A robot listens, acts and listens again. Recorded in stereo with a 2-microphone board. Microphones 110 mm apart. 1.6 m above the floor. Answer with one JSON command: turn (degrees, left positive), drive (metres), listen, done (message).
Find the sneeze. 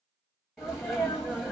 {"turn": -30}
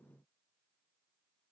{"listen": true}
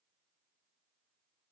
{"done": "I heard a sneeze, but can't make it out now. It was about 25° left or 145° right."}